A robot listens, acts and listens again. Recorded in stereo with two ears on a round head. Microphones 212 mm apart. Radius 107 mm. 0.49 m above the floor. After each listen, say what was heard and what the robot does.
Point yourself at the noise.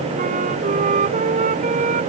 The flute: about 35° right or 145° right. Turn 35° right.
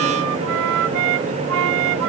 So it is at 105° right. Turn 105° right.
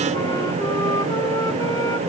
Keep listening.
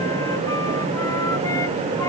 Keep listening.
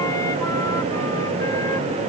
Facing where the flute came from. I can't hear it now.